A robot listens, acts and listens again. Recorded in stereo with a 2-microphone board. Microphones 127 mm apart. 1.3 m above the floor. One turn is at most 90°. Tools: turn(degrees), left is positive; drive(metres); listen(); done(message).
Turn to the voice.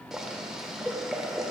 listen()
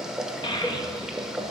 turn(degrees=35)
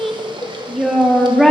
done("Facing the child speaking.")